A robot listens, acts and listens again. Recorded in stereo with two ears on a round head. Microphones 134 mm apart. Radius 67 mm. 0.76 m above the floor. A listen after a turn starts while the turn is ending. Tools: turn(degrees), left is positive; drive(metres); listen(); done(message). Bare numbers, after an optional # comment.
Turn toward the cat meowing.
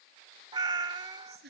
# The cat meowing: about 25° right or 155° right.
turn(-25)
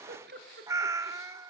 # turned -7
# The cat meowing: about 20° right or 160° right.
turn(-20)
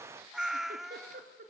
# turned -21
done("Found it: a cat meowing, straight ahead, under 1 m away.")